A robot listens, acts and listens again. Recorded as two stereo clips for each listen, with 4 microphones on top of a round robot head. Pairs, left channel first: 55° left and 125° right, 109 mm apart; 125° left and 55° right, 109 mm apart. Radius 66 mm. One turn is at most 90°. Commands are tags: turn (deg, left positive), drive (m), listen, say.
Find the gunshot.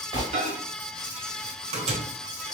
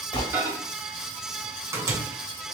<turn deg="90"/>
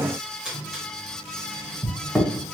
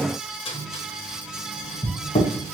<turn deg="90"/>
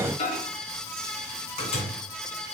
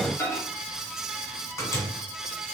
<say>Facing where the gunshot came from. I can't hear it now.</say>